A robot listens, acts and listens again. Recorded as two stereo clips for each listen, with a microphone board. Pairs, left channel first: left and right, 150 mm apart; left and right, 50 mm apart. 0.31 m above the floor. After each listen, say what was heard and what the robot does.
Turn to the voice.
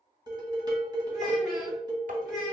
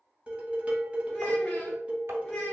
Turn 30° left.
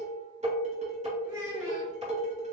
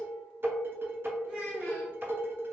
So it is at 25° right. Turn 25° right.
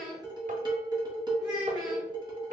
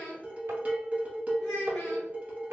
Facing the child speaking.